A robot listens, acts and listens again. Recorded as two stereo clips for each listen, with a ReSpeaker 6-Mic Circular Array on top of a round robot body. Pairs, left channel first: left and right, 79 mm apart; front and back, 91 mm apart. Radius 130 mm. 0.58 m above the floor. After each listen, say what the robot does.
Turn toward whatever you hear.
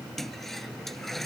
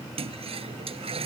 Turn 175° left.
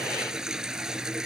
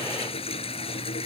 Turn 10° right.
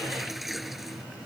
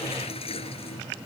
Facing the toilet flushing.